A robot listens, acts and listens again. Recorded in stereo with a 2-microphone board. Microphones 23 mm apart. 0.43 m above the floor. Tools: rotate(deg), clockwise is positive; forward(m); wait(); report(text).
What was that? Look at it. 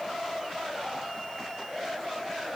wait()
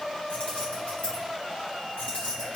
rotate(-50)
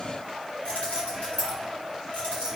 rotate(-80)
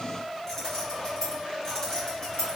rotate(-25)
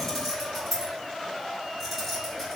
report("Facing the keys jangling.")